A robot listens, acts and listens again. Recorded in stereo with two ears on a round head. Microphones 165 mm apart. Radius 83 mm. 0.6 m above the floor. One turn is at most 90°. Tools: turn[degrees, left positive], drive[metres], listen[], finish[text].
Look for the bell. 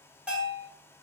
Action: turn[-30]
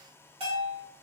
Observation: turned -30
Thought: So it is at 140° right.
Action: turn[-90]
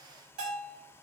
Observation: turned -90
Thought: The bell is now 55° right.
Action: turn[-55]
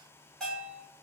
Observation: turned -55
Action: finish[Facing the bell.]